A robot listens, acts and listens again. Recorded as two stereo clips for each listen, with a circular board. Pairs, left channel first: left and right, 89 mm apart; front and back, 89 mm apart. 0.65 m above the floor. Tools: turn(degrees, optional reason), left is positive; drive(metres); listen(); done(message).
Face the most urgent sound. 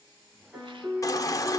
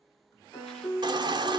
turn(degrees=145, reason="The baby crying: 145° left.")
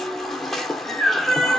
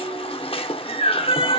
done("Found it: a baby crying, straight ahead.")